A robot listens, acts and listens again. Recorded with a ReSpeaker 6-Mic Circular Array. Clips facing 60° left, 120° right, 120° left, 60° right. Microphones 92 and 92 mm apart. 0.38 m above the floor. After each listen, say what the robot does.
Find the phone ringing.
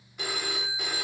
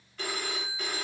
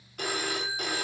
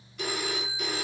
Turn 135° left.
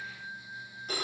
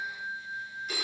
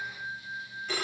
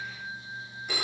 Turn 15° left.
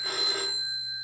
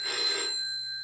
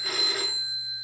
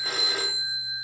Facing the phone ringing, under 1 m away.